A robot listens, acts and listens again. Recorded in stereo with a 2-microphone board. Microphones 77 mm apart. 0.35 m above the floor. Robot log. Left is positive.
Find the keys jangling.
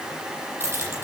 note: The keys jangling: about 30° right or 150° right.
cmd yaw -30
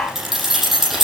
end: Facing the keys jangling, over 4 m away.